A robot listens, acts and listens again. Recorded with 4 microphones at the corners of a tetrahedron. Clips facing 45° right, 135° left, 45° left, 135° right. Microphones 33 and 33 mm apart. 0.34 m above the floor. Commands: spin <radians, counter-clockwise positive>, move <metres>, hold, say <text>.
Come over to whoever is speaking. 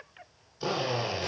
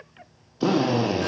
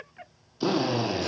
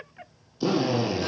hold
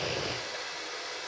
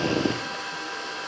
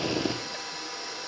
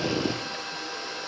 hold
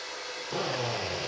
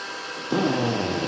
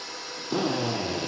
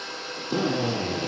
say I can't make out anyone speaking to turn to.